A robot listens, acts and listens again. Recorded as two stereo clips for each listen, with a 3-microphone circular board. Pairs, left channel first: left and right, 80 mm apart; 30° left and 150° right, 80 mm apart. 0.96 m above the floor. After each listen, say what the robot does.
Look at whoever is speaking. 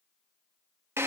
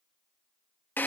Keep listening.
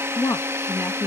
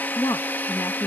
Turn 60° left.
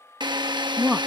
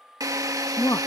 Turn 10° right.
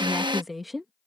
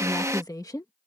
Found it: a woman speaking, straight ahead.